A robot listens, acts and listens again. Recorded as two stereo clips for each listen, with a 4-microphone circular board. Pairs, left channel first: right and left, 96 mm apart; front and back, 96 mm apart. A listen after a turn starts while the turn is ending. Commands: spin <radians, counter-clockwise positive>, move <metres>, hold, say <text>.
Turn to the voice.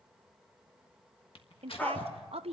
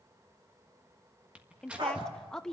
spin 1.48
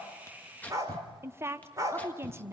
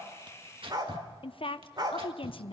spin 0.44
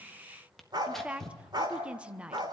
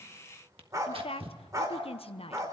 spin 0.17
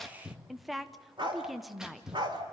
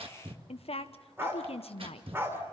say Found it: a woman speaking, straight ahead.